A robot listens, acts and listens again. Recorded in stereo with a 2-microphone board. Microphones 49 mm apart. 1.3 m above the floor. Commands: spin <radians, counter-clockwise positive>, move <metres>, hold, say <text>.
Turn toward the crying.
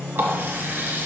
hold
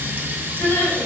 spin 1.05
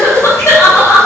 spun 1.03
spin 1.05
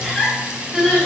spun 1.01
say Facing the crying, 2 to 4 m away.